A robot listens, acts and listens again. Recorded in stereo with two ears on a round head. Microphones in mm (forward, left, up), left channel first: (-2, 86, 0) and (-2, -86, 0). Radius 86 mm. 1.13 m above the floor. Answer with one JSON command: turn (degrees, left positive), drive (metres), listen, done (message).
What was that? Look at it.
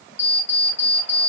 {"turn": 35}
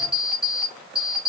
{"done": "Facing the alarm clock, 1 to 2 m away."}